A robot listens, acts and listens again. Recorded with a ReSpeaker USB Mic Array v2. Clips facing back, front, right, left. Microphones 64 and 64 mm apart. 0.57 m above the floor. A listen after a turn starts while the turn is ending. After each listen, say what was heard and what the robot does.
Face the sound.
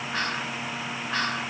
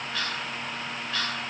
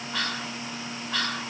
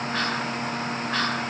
The whispering: 130° left. Turn 130° left.
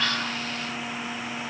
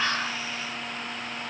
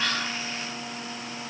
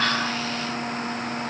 Keep listening.
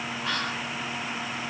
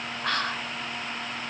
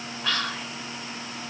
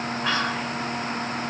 The whispering is now 20° left. Turn 20° left.
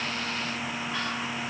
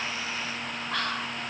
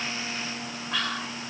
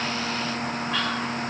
Facing the whispering.